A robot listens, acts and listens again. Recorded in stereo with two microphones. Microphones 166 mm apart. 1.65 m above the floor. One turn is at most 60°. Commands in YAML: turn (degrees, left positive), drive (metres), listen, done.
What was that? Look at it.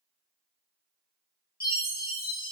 turn: 60
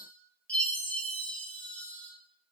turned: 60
turn: 10
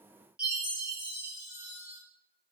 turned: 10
done: "Facing the chime, 1 to 2 m away."